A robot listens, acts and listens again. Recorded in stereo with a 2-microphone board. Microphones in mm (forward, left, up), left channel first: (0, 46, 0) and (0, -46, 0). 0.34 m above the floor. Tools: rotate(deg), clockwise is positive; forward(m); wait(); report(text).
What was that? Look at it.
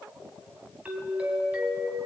rotate(15)
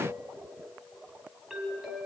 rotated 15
report("Found it: a doorbell, straight ahead, 2 to 4 m away.")